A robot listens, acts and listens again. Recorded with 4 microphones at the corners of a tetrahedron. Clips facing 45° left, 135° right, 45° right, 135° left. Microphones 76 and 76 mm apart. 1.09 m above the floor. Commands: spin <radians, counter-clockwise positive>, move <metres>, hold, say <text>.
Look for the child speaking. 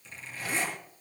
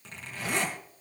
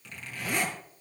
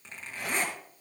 hold
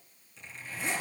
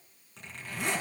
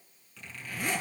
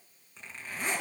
hold
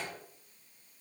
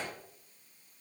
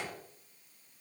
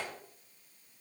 say I can't make out a child speaking to turn to.